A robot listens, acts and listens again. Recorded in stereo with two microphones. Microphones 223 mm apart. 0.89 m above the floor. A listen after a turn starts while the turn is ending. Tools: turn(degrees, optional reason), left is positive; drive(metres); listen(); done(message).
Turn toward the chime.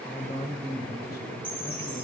turn(degrees=-30)
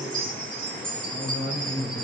turn(degrees=-140, reason="So it is at 140° right.")
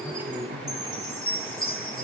turn(degrees=25, reason="The chime is now 25° left.")
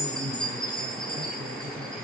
done("Found it: a chime, straight ahead, over 4 m away.")